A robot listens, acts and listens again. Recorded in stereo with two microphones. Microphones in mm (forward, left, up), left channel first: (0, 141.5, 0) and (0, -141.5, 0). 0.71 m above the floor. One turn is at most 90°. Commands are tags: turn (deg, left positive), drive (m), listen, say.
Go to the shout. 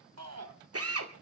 <turn deg="-65"/>
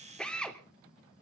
<listen/>
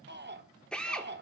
<turn deg="-40"/>
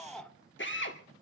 <drive m="1.0"/>
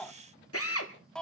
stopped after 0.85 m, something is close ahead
<say>I am next to the shout.</say>